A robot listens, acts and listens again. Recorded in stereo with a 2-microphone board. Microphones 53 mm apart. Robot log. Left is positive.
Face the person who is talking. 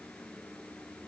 cmd idle
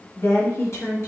note: The woman speaking: about 60° left or 120° left.
cmd yaw +60
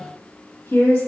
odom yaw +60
note: So it is at 50° left.
cmd yaw +50
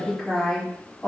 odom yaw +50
end: Facing the woman speaking.